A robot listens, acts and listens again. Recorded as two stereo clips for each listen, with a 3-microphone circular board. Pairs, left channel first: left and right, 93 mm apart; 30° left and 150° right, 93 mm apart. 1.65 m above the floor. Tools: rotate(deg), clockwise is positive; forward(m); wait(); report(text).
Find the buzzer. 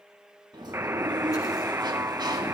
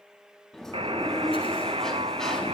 rotate(155)
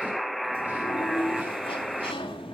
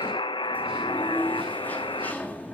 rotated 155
report("Facing the buzzer, under 1 m away.")